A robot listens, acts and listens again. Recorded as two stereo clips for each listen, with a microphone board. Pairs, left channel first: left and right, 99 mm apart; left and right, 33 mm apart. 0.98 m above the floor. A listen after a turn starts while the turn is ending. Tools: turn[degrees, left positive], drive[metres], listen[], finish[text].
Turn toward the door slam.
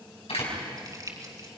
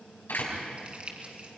Action: turn[90]
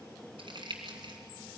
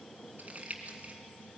Action: finish[I heard a door slam from this way, but can't make it out now.]